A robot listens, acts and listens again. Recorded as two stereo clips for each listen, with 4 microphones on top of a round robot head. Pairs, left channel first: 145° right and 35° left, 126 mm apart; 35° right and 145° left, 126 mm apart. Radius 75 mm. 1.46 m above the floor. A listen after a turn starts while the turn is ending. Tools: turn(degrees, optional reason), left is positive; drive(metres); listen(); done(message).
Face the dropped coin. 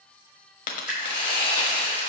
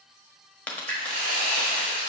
turn(degrees=-115, reason="The dropped coin: 115° right.")
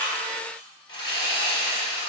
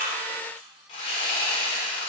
done("I heard a dropped coin from this way, but can't make it out now.")